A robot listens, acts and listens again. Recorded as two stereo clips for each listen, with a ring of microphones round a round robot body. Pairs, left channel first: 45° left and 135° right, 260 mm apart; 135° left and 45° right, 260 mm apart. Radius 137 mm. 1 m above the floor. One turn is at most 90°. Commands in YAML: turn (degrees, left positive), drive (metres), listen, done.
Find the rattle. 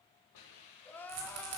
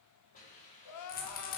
turn: -90
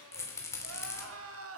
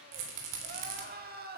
turn: -35
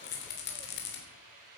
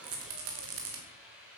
done: "Found it: a rattle, straight ahead."